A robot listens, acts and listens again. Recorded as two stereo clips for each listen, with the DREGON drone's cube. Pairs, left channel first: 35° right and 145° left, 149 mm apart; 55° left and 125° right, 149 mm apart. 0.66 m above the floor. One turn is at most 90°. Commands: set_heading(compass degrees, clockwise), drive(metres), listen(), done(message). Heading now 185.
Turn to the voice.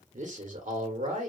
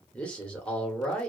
set_heading(95)
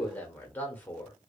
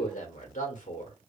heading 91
set_heading(51)
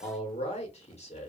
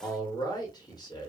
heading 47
done("Facing the man speaking.")